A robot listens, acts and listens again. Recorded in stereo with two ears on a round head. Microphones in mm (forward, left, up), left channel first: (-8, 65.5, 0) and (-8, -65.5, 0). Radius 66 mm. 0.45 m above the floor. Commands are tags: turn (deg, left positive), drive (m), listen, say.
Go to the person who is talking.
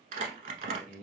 <turn deg="-55"/>
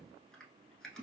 <turn deg="-55"/>
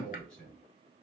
<drive m="1.0"/>
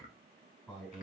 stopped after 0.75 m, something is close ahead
<turn deg="10"/>
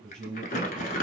<say>Arrived at the man speaking, straight ahead.</say>